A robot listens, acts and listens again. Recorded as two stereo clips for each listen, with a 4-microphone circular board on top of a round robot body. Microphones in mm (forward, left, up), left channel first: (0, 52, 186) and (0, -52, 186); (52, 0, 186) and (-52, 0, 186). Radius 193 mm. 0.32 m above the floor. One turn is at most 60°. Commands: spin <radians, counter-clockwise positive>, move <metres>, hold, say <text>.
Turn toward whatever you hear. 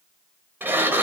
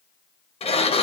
spin -0.35
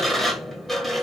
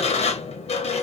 say Found it: a sliding door, straight ahead.